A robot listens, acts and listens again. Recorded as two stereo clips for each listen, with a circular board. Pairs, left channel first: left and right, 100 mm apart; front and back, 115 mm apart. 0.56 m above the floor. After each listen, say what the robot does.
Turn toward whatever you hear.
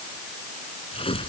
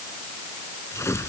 Turn 65° left.
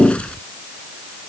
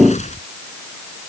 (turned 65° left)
Turn 10° left.
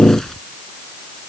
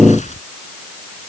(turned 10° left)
Found it: tearing paper, straight ahead.